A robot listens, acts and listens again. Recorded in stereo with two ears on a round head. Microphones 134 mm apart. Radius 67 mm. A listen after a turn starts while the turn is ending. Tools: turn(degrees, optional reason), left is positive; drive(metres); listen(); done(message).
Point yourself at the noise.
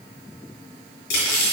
turn(degrees=90)
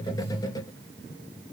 listen()
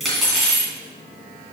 done("Found it: cutlery clinking, straight ahead.")